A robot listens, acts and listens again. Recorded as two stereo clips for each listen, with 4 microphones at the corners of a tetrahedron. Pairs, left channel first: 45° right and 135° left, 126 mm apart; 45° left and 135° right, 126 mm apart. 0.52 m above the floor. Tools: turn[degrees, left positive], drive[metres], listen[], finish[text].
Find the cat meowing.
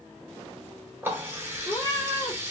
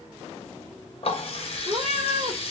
Thought: The cat meowing: 105° right.
Action: turn[-105]
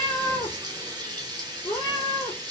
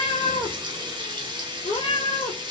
Thought: The cat meowing is now 10° left.
Action: turn[10]
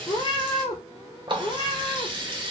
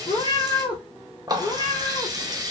Action: finish[Found it: a cat meowing, straight ahead.]